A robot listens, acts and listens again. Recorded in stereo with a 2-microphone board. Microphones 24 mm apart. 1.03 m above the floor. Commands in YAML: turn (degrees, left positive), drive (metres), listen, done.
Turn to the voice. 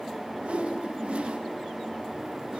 listen: true
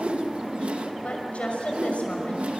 turn: 65
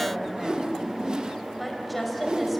done: "Found it: a woman speaking, straight ahead."